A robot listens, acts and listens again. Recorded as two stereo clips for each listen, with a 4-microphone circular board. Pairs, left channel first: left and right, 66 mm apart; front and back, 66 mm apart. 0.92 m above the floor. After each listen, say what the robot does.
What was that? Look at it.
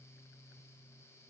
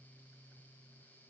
Keep listening.
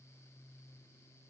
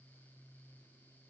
Keep listening.
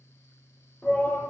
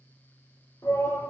Turn 30° left.
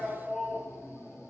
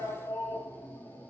Found it: a shout, straight ahead, 1 to 2 m away.